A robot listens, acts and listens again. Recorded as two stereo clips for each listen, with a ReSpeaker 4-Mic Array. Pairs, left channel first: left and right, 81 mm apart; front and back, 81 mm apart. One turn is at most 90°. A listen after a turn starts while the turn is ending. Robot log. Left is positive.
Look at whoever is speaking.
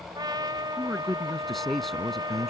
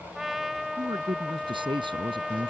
note: The man speaking: 175° left.
cmd yaw +90
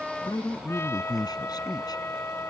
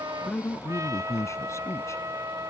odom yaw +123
note: The man speaking is now 55° left.
cmd yaw +55
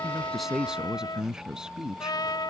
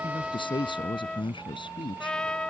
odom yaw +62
note: The man speaking is now 10° right.
cmd yaw -10
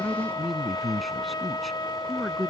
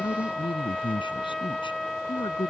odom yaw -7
end: Found it: a man speaking, straight ahead.